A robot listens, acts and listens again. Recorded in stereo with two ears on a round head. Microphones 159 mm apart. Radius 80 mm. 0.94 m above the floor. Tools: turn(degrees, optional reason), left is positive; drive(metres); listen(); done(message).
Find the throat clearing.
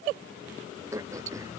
turn(degrees=-15, reason="The throat clearing: about 15° right or 165° right.")
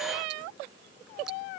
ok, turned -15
listen()
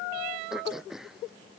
done("Facing the throat clearing.")